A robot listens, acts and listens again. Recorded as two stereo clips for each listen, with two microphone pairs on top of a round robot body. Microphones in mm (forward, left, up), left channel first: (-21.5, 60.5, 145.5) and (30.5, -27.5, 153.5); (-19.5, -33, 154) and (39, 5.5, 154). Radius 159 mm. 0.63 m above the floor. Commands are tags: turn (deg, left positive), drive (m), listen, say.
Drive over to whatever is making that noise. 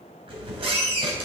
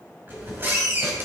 <turn deg="-25"/>
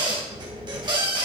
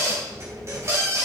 <turn deg="-15"/>
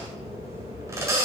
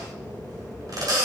<drive m="1.0"/>
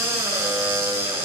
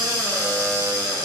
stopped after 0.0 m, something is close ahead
<say>Something is in my way. I am facing the squeak but have not reached it.</say>